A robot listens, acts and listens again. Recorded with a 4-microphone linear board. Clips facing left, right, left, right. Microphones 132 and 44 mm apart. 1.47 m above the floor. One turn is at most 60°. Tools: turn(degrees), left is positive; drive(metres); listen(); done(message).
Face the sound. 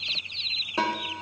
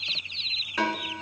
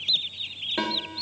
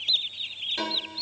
turn(degrees=25)
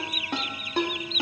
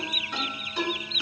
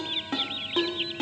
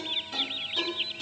turn(degrees=60)
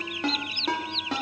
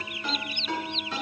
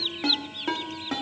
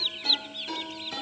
turn(degrees=60)
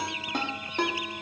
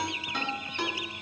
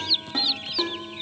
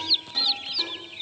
turn(degrees=45)
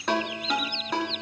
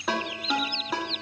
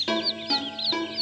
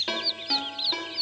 done("Facing the ringtone, 1 to 2 m away.")